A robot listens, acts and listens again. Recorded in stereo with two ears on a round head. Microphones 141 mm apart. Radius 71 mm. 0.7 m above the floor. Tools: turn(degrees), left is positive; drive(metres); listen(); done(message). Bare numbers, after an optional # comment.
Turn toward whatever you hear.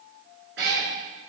# The cat meowing: about 75° right or 105° right.
turn(-75)
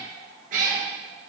# So it is at 55° right.
turn(-55)
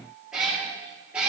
# The cat meowing is now 10° right.
turn(-10)
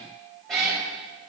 done("Facing the cat meowing.")